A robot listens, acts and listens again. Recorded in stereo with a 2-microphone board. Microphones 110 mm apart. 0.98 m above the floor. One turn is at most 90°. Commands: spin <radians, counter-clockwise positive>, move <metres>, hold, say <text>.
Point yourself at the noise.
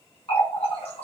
spin 1.05
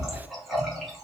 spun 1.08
say Facing the running tap.